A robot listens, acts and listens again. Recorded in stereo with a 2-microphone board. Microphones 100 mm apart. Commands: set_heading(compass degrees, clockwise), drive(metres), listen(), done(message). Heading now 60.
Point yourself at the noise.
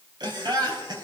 set_heading(105)
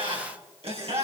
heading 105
set_heading(205)
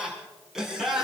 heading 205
done("Found it: laughter, straight ahead, over 4 m away.")